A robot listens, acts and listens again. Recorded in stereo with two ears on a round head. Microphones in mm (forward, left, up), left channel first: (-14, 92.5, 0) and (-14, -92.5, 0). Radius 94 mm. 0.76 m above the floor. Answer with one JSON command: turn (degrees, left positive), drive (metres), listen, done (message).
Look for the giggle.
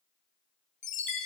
{"listen": true}
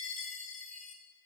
{"listen": true}
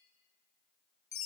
{"done": "I can't make out a giggle, only a chime."}